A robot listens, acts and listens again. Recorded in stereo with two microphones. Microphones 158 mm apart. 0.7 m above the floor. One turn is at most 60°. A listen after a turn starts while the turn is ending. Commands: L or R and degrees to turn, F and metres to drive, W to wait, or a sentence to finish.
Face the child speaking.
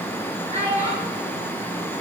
R45
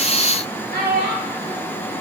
R60
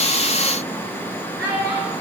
R15
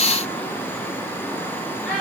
Found it: a child speaking, straight ahead.